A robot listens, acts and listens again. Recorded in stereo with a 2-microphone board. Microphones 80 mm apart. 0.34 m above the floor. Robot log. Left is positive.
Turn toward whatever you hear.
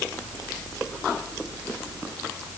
cmd idle
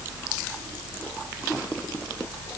cmd idle
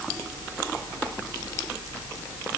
end: I can't make out anything to turn to.